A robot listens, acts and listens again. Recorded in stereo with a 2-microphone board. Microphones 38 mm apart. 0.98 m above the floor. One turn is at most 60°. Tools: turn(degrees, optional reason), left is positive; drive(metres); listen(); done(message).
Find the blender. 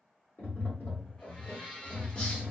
turn(degrees=25, reason="The blender: about 25° left or 155° left.")
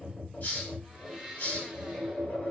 done("Found it: a blender, straight ahead, 1 to 2 m away.")